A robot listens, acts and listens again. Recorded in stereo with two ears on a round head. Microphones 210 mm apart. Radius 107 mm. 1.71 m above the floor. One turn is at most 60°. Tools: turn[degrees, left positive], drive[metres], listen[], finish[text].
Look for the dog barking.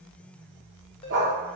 Thought: The dog barking: about 55° right or 125° right.
Action: turn[-55]
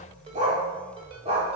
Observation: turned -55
Thought: So it is at 25° right.
Action: turn[-25]
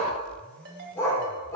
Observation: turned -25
Thought: The dog barking is now 15° left.
Action: turn[15]
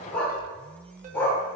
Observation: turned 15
Thought: The dog barking is now 10° left.
Action: turn[10]
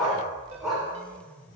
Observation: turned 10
Action: finish[Found it: a dog barking, straight ahead.]